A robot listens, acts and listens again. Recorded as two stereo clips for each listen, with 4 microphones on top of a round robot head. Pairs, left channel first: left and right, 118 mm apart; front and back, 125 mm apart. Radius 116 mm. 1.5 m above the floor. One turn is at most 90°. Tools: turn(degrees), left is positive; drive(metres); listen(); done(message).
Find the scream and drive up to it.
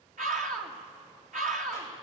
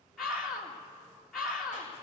turn(degrees=-85)
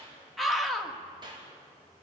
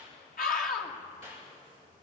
drive(metres=1.0)
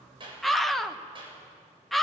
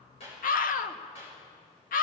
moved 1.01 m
drive(metres=1.0)
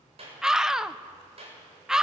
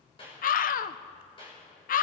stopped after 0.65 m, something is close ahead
done("I am next to the scream.")